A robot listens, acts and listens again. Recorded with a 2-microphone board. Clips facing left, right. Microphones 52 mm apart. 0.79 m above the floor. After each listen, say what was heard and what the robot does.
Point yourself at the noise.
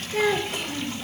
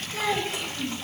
The child speaking: about 55° left or 125° left. Turn 55° left.
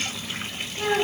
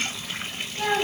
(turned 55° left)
So it is at 10° left. Turn 10° left.
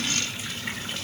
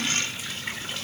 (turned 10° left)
Keep listening.
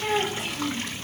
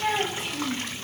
Facing the child speaking, 2 to 4 m away.